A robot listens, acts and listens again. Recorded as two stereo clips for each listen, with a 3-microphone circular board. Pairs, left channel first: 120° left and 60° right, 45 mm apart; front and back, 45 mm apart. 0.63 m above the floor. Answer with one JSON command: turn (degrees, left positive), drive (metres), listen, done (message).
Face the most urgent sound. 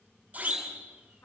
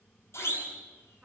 {"done": "Found it: a siren, straight ahead, over 4 m away."}